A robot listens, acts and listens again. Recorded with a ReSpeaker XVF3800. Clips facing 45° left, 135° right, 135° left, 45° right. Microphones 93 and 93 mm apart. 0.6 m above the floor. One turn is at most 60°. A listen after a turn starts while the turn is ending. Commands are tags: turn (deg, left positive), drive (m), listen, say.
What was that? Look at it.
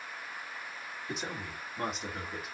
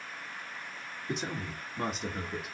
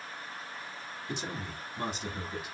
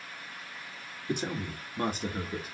<turn deg="-45"/>
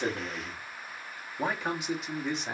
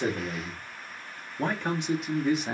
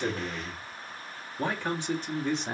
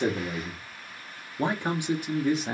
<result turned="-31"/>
<turn deg="-60"/>
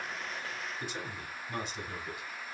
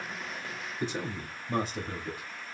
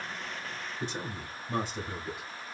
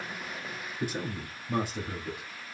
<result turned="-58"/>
<turn deg="-60"/>
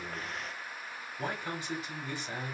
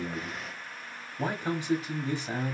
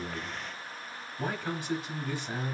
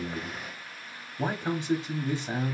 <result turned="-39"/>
<turn deg="-60"/>
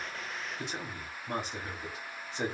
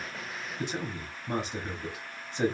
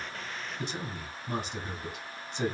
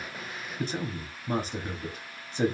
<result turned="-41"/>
<turn deg="-45"/>
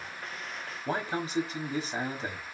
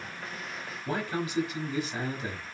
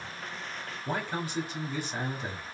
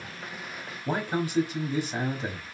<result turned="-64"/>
<turn deg="20"/>
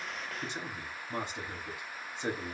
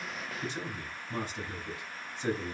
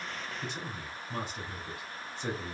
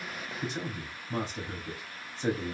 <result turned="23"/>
<say>Facing the man speaking, 1 to 2 m away.</say>